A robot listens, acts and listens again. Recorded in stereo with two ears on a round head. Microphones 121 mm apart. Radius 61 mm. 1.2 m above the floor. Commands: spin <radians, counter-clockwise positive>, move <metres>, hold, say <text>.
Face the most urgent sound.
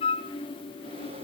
hold
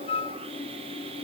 hold
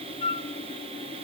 say I can't make out anything urgent to turn to.